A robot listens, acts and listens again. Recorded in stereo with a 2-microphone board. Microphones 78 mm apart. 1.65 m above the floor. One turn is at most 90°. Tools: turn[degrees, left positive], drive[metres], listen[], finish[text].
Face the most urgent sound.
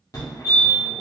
Thought: The fire alarm: about 40° left or 140° left.
Action: turn[40]
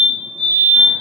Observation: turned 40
Action: finish[Facing the fire alarm.]